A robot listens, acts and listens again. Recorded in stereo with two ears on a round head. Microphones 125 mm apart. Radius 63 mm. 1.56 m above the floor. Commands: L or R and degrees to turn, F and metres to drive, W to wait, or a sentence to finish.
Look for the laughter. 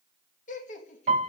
L60
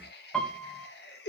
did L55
L85
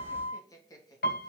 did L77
L25
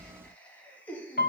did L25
L10
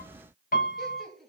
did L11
Facing the laughter.